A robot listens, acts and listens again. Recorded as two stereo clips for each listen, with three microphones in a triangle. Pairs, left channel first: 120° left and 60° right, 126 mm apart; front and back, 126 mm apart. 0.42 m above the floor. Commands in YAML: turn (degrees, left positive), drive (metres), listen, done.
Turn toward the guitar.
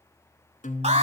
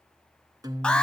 turn: 120
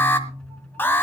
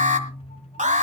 turn: 35
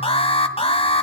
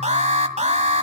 listen: true
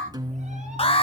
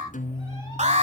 done: "Facing the guitar, 1 to 2 m away."